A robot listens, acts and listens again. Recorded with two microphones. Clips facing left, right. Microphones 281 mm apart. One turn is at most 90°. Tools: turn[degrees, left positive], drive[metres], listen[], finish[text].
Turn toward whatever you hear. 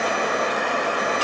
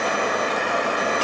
Action: listen[]
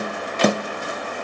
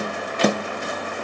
Action: listen[]
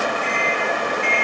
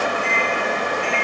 Action: turn[-30]
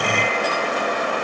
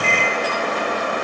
Thought: So it is at 145° right.
Action: turn[-90]
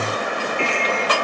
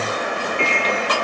Thought: The microwave is now 60° right.
Action: turn[-60]
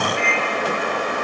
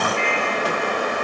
Action: finish[Found it: a microwave, straight ahead, under 1 m away.]